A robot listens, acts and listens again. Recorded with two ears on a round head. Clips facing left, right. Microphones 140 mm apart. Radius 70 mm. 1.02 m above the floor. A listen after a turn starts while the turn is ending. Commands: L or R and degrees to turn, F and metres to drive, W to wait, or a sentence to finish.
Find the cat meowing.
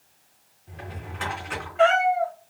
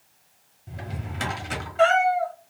R50
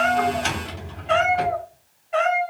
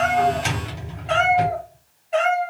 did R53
R35
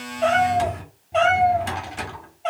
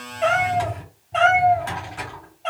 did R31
Facing the cat meowing, 2 to 4 m away.